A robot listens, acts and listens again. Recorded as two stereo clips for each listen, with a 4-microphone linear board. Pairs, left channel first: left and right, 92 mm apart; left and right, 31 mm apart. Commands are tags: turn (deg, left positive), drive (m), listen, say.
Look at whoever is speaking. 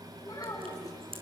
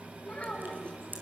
<turn deg="40"/>
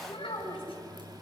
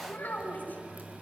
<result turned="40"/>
<turn deg="100"/>
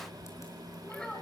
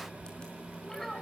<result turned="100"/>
<turn deg="10"/>
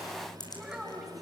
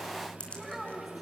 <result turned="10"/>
<say>Found it: a child speaking, straight ahead.</say>